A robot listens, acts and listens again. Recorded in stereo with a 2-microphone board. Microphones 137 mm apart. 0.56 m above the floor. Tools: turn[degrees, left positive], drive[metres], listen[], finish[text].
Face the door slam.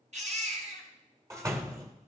Thought: The door slam: about 25° right or 155° right.
Action: turn[-25]
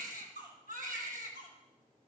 Action: listen[]
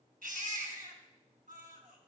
Action: finish[I heard a door slam, but can't make it out now. It was about straight ahead or 130° right.]